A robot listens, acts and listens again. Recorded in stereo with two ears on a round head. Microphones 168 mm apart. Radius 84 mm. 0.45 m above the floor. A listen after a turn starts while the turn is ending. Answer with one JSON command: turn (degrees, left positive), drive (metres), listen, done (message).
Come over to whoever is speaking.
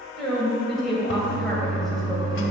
{"turn": 30}
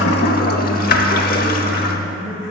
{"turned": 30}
{"turn": 150}
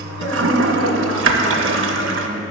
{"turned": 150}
{"listen": true}
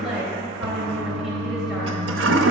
{"drive": 1.0}
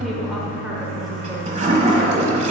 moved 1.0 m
{"listen": true}
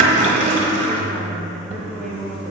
{"drive": 1.0}
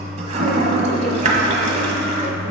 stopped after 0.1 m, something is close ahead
{"listen": true}
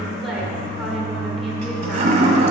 {"done": "I am next to the woman speaking."}